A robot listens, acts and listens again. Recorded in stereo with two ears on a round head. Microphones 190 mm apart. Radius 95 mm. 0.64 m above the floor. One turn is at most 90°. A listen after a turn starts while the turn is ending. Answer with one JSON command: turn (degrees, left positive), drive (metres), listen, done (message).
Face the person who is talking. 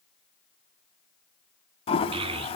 {"turn": -25}
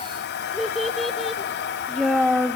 {"done": "Facing the child speaking."}